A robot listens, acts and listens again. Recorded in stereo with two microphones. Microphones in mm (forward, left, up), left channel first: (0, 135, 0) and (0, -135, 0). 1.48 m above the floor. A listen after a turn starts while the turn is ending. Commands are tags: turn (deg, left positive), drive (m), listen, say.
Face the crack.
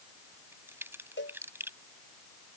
<turn deg="-30"/>
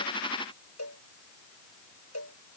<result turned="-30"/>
<listen/>
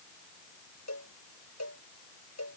<say>I heard a crack, but can't make it out now. It was about 20° left or 140° right.</say>